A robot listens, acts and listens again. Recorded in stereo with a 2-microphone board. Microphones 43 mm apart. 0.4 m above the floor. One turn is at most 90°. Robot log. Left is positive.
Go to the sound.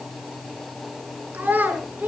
note: The child speaking: about 45° right or 135° right.
cmd yaw -45
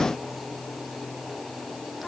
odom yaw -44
cmd idle
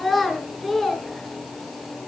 cmd fwd 1.0
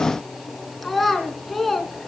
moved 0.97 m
cmd fwd 1.0
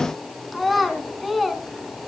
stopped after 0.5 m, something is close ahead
end: Blocked. The child speaking is further on, straight ahead.